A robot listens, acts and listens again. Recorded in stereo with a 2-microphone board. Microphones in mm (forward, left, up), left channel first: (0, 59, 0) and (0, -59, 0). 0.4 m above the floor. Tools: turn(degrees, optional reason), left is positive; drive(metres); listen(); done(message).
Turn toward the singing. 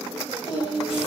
turn(degrees=40, reason="The singing: about 40° left or 140° left.")
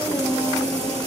turn(degrees=105, reason="So it is at 105° left.")
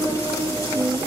turn(degrees=-25, reason="The singing is now 25° right.")
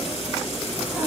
listen()
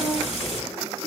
listen()
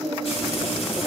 done("Found it: singing, straight ahead, over 4 m away.")